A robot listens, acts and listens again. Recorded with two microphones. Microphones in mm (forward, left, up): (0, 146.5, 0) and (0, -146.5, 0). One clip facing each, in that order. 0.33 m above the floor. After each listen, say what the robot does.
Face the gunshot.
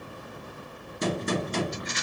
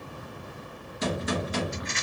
Turn 40° left.
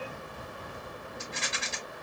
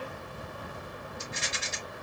Keep listening.
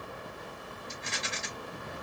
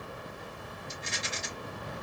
I heard a gunshot, but can't make it out now. It was about straight ahead or 100° left.